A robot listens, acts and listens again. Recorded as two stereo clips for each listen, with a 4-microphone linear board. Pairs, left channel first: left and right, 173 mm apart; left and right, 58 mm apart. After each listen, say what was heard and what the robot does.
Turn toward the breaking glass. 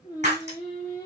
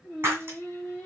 The breaking glass: about 45° right or 135° right. Turn 45° right.
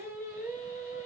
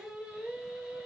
Keep listening.
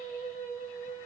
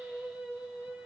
I heard breaking glass, but can't make it out now. It was about straight ahead or 90° right.